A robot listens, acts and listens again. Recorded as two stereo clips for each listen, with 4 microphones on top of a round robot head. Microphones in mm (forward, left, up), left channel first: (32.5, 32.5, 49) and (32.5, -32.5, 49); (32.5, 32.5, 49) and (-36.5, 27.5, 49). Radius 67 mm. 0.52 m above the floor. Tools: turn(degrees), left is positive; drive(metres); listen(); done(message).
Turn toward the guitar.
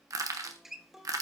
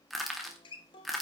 done("Facing the guitar.")